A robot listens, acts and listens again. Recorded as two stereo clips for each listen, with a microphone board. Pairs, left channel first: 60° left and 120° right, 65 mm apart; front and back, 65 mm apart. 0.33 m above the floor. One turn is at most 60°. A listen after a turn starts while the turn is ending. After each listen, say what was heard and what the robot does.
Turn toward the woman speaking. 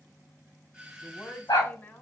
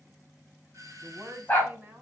The woman speaking: 120° left. Turn 60° left.
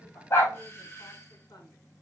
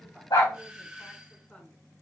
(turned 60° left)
Nothing new. It was at 60° left. Turn 60° left.
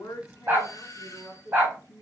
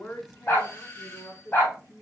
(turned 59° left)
The woman speaking is now 20° left. Turn 20° left.
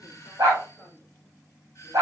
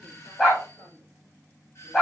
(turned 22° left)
Keep listening.
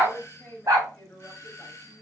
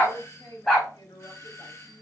Found it: a woman speaking, straight ahead.